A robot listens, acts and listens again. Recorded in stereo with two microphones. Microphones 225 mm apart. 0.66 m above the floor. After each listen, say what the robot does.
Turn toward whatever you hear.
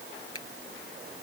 Turn 90° left.
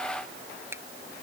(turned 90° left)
Turn 10° right.
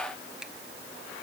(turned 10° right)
Keep listening.
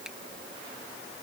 Keep listening.
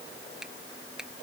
Found it: a finger snap, straight ahead.